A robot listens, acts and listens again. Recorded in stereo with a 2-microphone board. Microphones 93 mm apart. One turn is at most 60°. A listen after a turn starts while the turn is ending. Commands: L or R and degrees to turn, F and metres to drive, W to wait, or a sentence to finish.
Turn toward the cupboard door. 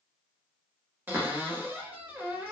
R20
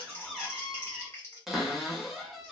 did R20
Found it: a cupboard door, straight ahead, under 1 m away.